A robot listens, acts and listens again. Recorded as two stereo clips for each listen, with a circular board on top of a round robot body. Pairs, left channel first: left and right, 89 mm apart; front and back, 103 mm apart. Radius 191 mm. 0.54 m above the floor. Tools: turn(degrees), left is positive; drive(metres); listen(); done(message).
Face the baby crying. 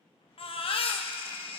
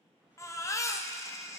turn(degrees=65)
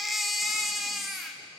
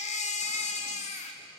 done("Facing the baby crying.")